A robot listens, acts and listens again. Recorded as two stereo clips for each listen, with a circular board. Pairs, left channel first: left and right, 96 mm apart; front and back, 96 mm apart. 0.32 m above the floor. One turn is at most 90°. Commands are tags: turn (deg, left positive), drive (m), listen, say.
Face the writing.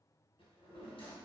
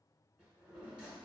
<listen/>
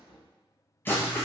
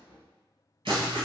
<turn deg="90"/>
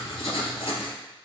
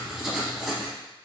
<turn deg="90"/>
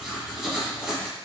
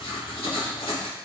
<say>Facing the writing, under 1 m away.</say>